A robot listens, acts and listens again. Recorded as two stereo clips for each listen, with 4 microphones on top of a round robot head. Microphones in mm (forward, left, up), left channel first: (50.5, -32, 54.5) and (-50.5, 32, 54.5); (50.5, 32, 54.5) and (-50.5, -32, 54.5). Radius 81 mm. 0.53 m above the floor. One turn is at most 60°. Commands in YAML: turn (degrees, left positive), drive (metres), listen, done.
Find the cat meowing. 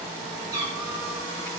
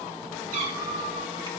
turn: -60
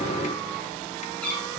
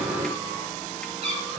turn: -60
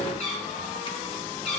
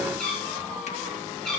turn: -55
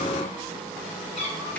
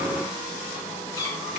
turn: -25
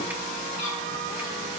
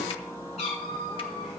done: "Found it: a cat meowing, straight ahead, over 4 m away."